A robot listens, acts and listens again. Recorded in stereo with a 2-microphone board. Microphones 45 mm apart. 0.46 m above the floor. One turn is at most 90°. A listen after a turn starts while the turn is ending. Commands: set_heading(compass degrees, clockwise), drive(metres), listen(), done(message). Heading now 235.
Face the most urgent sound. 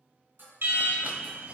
set_heading(300)
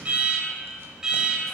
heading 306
set_heading(326)
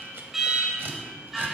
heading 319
done("Facing the alarm.")